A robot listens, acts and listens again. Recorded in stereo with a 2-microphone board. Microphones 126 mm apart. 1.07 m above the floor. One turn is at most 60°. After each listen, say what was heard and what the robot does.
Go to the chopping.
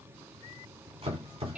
The chopping: about 45° right or 135° right. Turn 45° right.
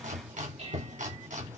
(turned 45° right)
So it is at 90° right. Turn 60° right.
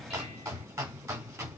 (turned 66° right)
The chopping is now 25° right. Turn 25° right.
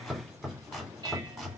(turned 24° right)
Drive 1.0 m forward.
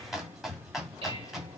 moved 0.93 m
Drive 1.0 m forward.
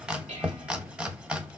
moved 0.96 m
The chopping is now 10° right. Turn 10° right.
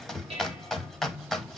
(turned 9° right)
Drive 1.0 m forward.
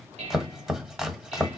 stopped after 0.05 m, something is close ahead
I am next to the chopping.